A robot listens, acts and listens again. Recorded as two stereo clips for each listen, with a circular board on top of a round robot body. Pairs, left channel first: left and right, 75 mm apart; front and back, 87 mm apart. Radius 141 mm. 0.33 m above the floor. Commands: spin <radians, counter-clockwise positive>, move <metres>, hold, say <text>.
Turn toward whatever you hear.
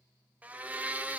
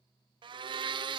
spin -2.79
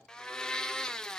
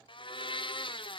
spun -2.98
spin 0.17
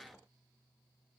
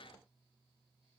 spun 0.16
hold
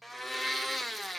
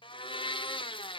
say Facing the blender, under 1 m away.